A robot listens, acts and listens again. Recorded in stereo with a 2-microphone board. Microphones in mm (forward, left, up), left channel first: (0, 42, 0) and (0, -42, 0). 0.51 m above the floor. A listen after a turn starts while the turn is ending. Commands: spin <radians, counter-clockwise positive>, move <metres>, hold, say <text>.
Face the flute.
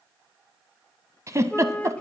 spin 0.26
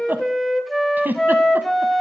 say Found it: a flute, straight ahead.